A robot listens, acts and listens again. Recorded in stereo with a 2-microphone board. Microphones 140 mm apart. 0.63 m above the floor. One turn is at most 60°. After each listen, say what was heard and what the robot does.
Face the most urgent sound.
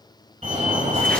The fire alarm: about 55° right or 125° right. Turn 55° right.
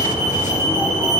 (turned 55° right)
So it is at 25° right. Turn 25° right.
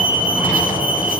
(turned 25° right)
The fire alarm is now 10° right. Turn 10° right.
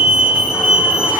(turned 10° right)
Facing the fire alarm, 2 to 4 m away.